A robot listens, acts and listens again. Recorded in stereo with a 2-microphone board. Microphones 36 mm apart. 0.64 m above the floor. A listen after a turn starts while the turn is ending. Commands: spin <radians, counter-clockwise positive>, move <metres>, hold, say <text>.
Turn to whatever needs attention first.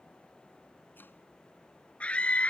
spin 0.61
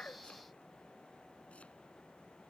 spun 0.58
hold
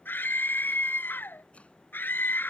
spin 2.01
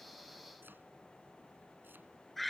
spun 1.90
say Facing the scream.